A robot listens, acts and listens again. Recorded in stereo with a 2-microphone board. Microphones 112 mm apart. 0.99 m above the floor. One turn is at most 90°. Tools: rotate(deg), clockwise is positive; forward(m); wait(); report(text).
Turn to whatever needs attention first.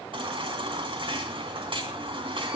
rotate(50)
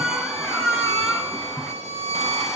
report("Found it: a baby crying, straight ahead.")